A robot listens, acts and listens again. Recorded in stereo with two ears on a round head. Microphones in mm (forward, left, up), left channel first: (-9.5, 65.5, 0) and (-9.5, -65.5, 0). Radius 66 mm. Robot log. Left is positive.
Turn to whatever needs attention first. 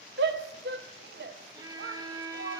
cmd yaw -90
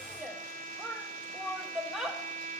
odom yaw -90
end: Found it: a shout, straight ahead, 1 to 2 m away.